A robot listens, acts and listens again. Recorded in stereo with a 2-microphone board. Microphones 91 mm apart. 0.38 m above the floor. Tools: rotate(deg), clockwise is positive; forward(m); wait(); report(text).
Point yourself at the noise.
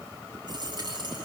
rotate(50)
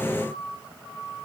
wait()
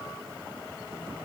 report("I heard a dropped coin, but can't make it out now. It was about straight ahead or 80° right.")